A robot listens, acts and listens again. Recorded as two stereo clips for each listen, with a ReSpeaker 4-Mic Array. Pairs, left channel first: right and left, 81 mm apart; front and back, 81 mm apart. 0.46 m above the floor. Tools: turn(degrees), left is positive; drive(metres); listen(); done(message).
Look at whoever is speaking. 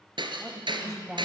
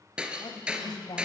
done("Found it: a woman speaking, straight ahead, 2 to 4 m away.")